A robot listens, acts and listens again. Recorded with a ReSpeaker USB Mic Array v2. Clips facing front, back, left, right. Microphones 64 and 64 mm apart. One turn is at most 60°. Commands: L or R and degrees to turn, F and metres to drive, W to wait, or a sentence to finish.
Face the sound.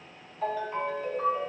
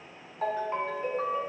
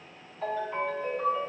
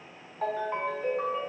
R60
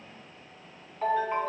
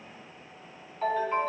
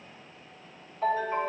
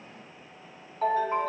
R60
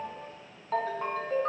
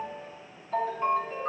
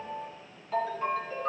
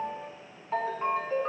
R25
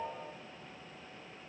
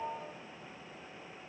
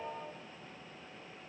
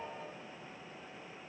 L10
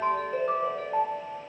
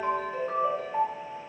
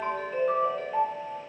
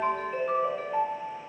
Found it: a ringtone, straight ahead, 2 to 4 m away.